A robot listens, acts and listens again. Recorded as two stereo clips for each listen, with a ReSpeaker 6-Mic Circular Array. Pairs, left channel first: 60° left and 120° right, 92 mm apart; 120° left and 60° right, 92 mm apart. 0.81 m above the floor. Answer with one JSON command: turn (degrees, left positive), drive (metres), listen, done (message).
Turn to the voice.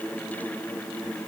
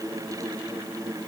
{"listen": true}
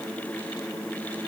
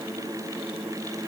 {"listen": true}
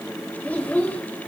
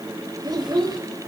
{"turn": -15}
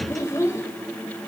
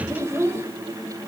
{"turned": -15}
{"done": "Found it: a child speaking, straight ahead."}